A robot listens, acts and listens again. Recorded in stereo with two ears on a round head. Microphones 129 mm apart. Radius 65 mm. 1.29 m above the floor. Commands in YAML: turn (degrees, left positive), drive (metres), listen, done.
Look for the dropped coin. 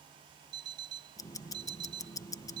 listen: true
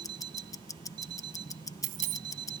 turn: -60
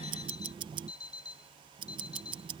listen: true
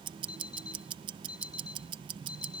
done: "I heard a dropped coin, but can't make it out now. It was about straight ahead or 60° right."